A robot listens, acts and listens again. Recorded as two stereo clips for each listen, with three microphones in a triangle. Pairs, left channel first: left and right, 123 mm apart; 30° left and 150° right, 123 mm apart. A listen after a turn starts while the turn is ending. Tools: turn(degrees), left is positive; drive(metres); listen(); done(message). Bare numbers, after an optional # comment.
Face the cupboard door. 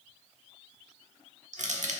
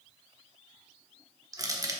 listen()
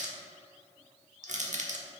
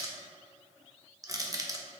listen()
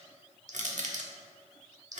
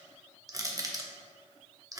done("I can't make out a cupboard door, only crushing.")